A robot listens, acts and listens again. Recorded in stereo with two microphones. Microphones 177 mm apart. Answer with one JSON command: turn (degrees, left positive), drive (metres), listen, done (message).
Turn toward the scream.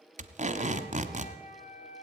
{"listen": true}
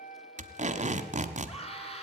{"turn": 35}
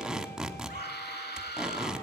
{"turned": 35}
{"turn": 105}
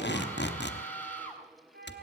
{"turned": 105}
{"turn": 10}
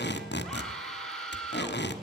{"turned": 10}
{"done": "Found it: a scream, straight ahead."}